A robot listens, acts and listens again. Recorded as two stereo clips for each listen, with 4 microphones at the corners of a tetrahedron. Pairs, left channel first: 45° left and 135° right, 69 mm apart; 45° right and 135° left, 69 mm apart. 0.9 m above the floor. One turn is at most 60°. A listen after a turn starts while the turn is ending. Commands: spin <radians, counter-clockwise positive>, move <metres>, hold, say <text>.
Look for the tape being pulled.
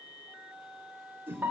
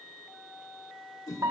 hold
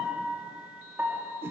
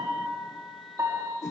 hold
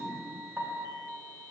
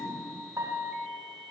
say I can't make out tape being pulled to turn to.